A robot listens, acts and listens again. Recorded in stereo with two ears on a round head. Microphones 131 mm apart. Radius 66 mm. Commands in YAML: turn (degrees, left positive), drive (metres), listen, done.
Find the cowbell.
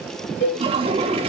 turn: 90
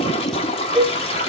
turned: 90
done: "Found it: a cowbell, straight ahead."